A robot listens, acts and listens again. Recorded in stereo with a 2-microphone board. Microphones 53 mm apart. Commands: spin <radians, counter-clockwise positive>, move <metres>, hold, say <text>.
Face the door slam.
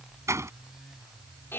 spin -1.13
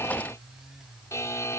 hold
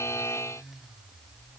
say I heard a door slam, but can't make it out now. It was about straight ahead or 50° right.